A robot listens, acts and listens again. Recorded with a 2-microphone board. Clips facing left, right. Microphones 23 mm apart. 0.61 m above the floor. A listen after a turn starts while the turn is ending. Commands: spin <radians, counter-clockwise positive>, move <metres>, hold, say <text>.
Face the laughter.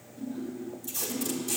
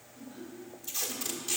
spin -0.35
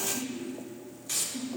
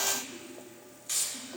spin -2.18
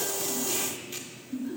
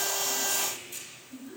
spin 0.61
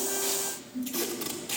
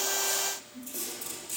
spin -0.17
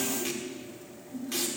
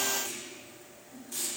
spin 0.17
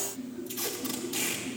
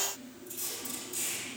say Facing the laughter, 2 to 4 m away.